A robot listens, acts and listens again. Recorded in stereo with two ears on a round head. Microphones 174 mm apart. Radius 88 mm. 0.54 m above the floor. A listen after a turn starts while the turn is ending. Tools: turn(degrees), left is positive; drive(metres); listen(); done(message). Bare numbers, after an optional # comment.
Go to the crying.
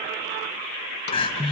# The crying: about 25° left or 155° left.
turn(25)
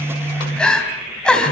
drive(1.0)
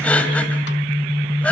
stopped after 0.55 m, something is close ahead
done("Blocked. The crying is further on, straight ahead.")